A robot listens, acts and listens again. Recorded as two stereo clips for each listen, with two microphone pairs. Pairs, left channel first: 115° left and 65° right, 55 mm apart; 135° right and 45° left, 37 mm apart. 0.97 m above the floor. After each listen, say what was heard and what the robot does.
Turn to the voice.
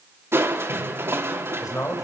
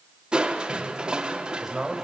The man speaking: 120° left. Turn 120° left.
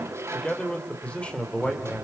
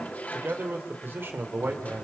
The man speaking is now 50° left. Turn 50° left.
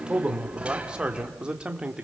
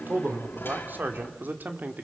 The man speaking is now 10° left. Turn 10° left.
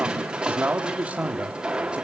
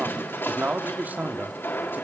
Found it: a man speaking, straight ahead.